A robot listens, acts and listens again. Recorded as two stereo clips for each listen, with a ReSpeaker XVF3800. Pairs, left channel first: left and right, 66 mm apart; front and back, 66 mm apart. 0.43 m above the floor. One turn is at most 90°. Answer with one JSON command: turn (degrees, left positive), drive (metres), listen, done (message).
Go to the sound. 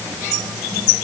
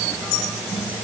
{"listen": true}
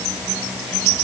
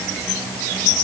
{"listen": true}
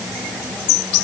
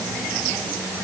{"done": "I can't make out anything to turn to."}